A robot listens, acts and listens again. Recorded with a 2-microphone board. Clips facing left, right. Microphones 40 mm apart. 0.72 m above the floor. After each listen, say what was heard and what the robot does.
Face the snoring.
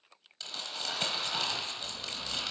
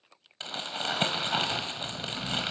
Turn 90° left.
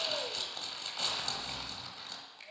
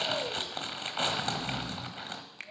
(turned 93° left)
Facing the snoring.